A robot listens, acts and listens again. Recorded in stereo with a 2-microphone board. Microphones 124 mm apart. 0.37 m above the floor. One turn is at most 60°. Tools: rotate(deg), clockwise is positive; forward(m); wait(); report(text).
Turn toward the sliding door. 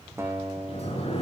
rotate(-55)
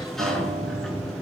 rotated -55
report("Found it: a sliding door, straight ahead, 2 to 4 m away.")